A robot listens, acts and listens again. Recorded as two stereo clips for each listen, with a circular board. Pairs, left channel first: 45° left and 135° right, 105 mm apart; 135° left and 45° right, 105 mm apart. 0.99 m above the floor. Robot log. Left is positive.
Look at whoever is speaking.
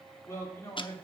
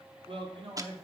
note: The man speaking: 20° right.
cmd yaw -20
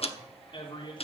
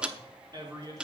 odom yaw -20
end: Facing the man speaking, 2 to 4 m away.